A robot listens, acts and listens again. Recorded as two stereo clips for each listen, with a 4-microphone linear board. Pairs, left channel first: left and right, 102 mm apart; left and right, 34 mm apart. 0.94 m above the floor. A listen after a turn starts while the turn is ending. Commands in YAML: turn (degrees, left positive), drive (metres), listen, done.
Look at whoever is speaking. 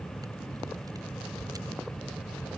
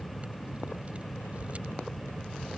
listen: true
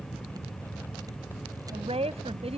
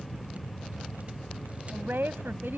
turn: -90
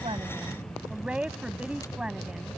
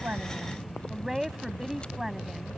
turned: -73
turn: -10
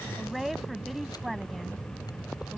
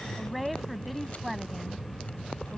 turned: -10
done: "Facing the woman speaking."